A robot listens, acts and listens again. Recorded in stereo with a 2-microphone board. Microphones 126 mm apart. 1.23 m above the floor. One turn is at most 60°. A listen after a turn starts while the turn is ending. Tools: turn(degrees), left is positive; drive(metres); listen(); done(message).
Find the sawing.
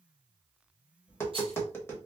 listen()
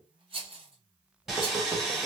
turn(degrees=-30)
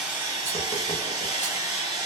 turn(degrees=-60)
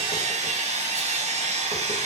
turn(degrees=-60)
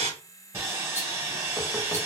turn(degrees=-20)
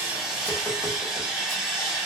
done("Facing the sawing, 1 to 2 m away.")